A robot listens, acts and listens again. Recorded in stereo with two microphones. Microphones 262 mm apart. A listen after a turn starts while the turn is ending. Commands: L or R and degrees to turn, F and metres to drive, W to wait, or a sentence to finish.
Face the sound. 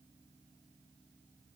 W
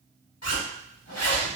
L70
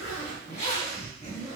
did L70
L25
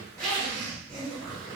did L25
Facing the zipper.